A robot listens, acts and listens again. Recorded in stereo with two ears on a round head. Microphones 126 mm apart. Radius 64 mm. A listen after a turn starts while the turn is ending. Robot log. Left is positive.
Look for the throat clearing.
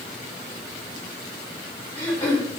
note: The throat clearing: about 15° left or 165° left.
cmd yaw +15
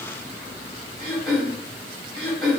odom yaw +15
end: Found it: throat clearing, straight ahead.